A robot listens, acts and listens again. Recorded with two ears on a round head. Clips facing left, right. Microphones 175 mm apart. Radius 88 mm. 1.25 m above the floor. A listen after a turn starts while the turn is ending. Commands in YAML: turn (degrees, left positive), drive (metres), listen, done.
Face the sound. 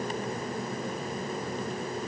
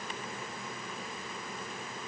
listen: true
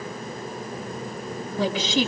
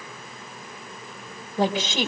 turn: -45
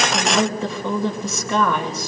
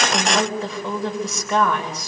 done: "Found it: a woman speaking, straight ahead, over 4 m away."